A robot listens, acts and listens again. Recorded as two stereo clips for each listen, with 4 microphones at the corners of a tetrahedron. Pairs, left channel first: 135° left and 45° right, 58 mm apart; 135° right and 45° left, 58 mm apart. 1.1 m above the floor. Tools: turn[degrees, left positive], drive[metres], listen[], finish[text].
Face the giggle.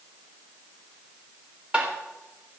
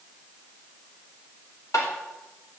Action: listen[]
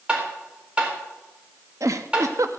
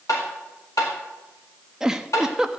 Thought: The giggle: 30° right.
Action: turn[-30]
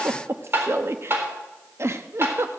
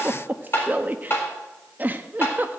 Thought: The giggle is now 10° right.
Action: turn[-10]
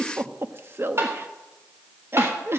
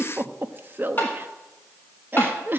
Action: finish[Found it: a giggle, straight ahead, under 1 m away.]